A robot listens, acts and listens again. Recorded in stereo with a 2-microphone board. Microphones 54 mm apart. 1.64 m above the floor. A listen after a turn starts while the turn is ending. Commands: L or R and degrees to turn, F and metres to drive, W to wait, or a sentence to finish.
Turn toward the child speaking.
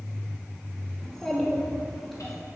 R30
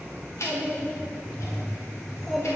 L30
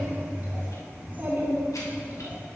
R35
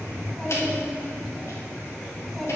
Facing the child speaking, 2 to 4 m away.